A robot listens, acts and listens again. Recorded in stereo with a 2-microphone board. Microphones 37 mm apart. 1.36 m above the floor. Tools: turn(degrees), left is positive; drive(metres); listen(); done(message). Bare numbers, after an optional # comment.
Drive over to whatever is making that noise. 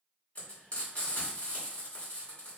# The frying: about 45° left or 135° left.
turn(45)
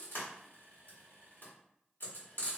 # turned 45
# So it is at 90° left.
turn(90)
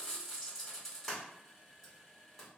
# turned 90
drive(1.0)
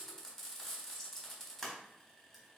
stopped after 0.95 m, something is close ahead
done("Arrived at the frying, straight ahead.")